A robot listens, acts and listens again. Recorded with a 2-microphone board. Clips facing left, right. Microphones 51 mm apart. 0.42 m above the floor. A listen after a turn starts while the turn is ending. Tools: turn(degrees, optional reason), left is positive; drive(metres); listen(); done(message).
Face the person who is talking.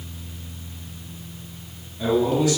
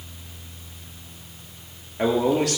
turn(degrees=-65, reason="The man speaking: about 65° right or 115° right.")
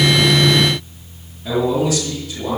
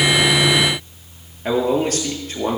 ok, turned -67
turn(degrees=-50, reason="So it is at 50° right.")
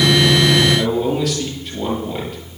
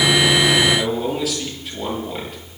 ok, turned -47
done("Facing the man speaking.")